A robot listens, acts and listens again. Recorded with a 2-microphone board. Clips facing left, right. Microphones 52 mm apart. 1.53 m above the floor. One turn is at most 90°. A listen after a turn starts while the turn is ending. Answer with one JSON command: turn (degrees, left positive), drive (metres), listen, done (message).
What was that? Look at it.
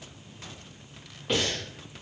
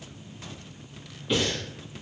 {"turn": 60}
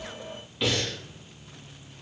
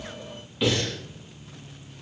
{"done": "Facing the breathing, 1 to 2 m away."}